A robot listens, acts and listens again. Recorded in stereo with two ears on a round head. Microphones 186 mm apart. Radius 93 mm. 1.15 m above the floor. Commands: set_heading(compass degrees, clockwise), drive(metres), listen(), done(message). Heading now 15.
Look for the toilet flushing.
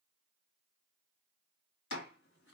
listen()
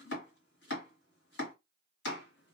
listen()
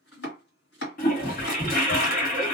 set_heading(330)
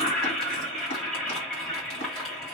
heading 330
done("Found it: a toilet flushing, straight ahead.")